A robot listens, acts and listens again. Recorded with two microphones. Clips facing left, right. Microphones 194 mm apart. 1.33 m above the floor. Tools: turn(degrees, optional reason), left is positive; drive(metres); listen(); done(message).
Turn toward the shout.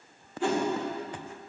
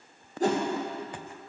listen()
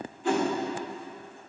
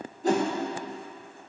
listen()
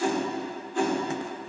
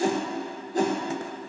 done("I can't make out a shout, only a whoosh.")